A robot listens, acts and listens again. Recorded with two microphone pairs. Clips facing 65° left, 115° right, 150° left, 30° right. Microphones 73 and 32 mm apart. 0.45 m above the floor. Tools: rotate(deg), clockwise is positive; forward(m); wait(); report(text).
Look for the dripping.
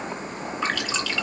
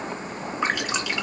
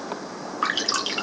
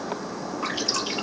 rotate(-170)
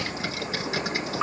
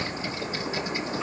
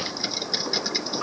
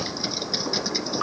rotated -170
rotate(-30)
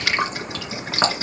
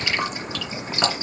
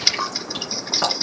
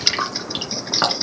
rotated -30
rotate(-15)
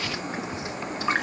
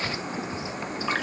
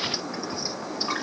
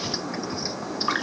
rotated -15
report("Facing the dripping, 2 to 4 m away.")